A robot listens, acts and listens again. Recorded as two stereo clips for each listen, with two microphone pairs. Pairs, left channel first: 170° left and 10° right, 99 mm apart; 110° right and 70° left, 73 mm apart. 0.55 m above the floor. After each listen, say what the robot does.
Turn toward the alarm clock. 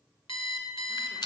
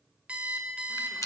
Turn 145° left.
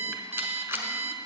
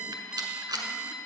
Turn 10° right.
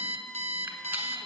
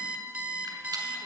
Facing the alarm clock, under 1 m away.